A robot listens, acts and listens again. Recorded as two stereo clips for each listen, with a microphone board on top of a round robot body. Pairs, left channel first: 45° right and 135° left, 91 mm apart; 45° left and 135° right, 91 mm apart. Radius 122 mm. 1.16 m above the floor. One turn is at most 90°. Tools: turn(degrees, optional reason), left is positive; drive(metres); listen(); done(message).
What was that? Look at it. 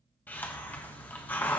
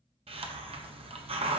turn(degrees=-90, reason="The hiss: 115° right.")
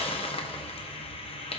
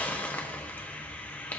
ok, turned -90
turn(degrees=-30, reason="The hiss is now 30° right.")
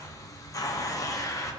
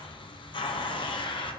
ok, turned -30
turn(degrees=10, reason="The hiss is now 10° left.")
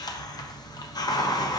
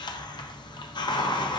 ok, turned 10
done("Found it: a hiss, straight ahead.")